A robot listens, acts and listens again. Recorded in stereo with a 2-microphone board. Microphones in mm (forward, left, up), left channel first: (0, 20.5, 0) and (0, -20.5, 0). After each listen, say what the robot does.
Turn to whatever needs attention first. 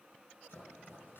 Keep listening.
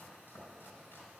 Keep listening.
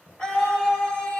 Turn 20° left.
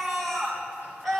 Facing the scream.